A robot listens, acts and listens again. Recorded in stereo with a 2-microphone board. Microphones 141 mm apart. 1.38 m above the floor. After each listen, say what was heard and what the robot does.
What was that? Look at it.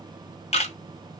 The camera shutter: about 50° left or 130° left. Turn 50° left.
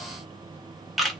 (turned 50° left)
Facing the camera shutter.